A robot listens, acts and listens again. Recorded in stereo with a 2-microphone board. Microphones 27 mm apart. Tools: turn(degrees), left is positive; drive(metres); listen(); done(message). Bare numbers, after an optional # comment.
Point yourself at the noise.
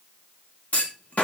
# The clunk: about 60° left or 120° left.
turn(60)
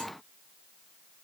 listen()
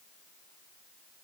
done("I heard a clunk, but can't make it out now. It was about straight ahead or 60° left.")